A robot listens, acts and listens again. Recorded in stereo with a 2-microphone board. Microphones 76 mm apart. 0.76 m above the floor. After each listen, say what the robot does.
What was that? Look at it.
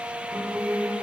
Turn 20° right.
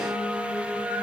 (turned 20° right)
Turn 25° right.
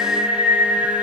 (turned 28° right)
Turn 140° right.
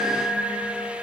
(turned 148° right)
Facing the singing, 2 to 4 m away.